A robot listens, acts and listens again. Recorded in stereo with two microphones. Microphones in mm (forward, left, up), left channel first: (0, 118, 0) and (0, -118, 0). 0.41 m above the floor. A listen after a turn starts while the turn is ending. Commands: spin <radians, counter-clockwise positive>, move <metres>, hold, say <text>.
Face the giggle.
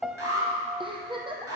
spin -0.35
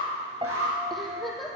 say Facing the giggle.